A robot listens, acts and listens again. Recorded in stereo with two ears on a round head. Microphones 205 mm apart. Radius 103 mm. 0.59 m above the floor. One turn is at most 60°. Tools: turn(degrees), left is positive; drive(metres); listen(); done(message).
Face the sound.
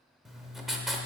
turn(degrees=30)
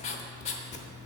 turn(degrees=60)
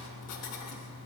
turn(degrees=60)
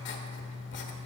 turn(degrees=55)
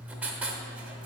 done("Facing the writing.")